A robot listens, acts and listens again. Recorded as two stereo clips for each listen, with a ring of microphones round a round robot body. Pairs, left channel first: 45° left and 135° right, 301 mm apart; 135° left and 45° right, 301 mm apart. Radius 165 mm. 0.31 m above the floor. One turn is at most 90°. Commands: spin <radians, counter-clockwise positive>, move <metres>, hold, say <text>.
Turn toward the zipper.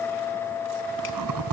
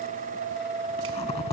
spin -1.57
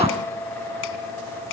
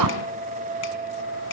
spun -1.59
spin -1.13
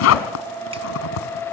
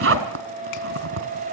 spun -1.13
say Facing the zipper.